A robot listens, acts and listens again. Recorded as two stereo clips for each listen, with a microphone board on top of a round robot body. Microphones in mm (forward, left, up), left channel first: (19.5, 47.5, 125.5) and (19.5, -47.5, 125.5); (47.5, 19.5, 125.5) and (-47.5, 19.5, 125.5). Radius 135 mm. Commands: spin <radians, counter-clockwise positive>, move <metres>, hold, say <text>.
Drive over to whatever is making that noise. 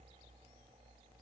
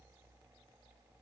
hold
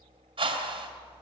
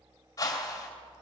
spin -1.05
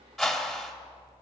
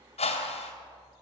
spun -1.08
move 1.0
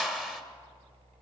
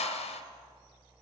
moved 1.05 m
move 1.0
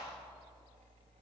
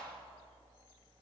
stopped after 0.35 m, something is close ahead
hold
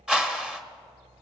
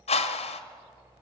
say Arrived at the whoosh, straight ahead.